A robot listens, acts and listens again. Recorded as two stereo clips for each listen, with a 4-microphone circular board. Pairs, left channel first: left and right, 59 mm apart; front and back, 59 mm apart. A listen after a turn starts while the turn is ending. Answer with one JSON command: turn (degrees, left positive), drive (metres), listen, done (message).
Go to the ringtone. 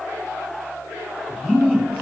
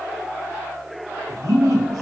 {"listen": true}
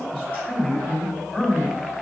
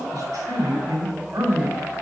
{"listen": true}
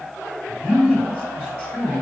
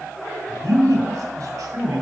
{"done": "I can't make out a ringtone, only a man speaking."}